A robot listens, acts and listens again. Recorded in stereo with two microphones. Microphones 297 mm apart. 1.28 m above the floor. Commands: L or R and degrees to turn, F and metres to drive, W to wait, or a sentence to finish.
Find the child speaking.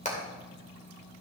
W
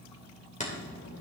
L70
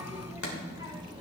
R15
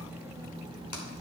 R20
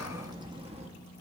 R20
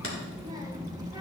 R10
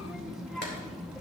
Found it: a child speaking, straight ahead.